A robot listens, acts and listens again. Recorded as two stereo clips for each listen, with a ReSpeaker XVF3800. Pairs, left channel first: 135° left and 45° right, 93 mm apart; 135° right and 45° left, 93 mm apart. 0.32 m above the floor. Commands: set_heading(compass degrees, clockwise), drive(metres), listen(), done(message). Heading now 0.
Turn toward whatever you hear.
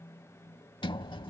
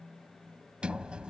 set_heading(240)
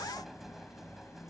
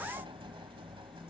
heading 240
set_heading(200)
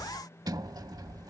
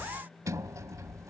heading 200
done("Facing the sliding door.")